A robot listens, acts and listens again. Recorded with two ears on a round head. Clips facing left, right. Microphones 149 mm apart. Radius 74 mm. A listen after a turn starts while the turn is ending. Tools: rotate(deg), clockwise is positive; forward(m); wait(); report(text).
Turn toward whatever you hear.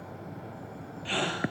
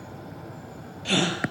rotate(50)
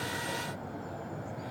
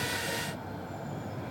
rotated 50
wait()
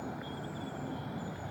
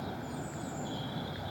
report("I heard a gasp, but can't make it out now. It was about straight ahead or 80° right.")